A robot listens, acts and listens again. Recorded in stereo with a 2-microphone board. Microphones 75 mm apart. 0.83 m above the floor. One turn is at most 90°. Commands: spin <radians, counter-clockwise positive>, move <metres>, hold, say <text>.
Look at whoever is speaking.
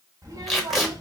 spin -1.22
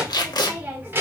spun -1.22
spin -0.52
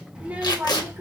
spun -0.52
spin -0.52
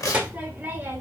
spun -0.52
spin -0.52
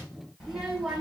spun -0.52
spin -0.17
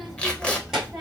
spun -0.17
say Facing the child speaking.